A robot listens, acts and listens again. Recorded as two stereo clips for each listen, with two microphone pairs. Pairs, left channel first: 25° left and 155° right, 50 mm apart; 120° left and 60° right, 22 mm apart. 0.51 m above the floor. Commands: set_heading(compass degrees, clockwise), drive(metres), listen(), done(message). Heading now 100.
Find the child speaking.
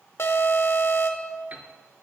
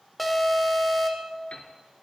listen()
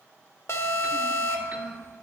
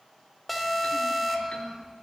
set_heading(275)
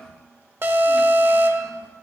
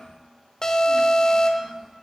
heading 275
listen()
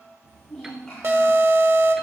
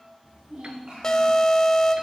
set_heading(335)
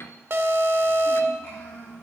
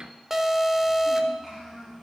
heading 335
done("Found it: a child speaking, straight ahead, 2 to 4 m away.")